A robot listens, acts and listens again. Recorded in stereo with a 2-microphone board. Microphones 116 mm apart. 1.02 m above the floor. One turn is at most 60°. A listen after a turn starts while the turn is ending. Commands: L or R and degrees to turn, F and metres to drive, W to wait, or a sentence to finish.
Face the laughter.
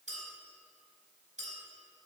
W
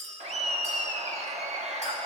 R60
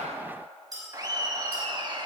R45
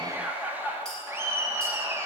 R20
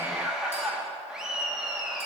Facing the laughter, 1 to 2 m away.